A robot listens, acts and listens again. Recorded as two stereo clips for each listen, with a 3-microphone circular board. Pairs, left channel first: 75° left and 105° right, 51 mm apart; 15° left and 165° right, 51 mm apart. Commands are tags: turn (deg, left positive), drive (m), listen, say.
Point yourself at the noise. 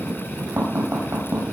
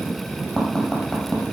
<turn deg="-70"/>
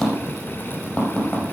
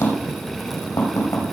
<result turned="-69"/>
<say>Facing the tapping, over 4 m away.</say>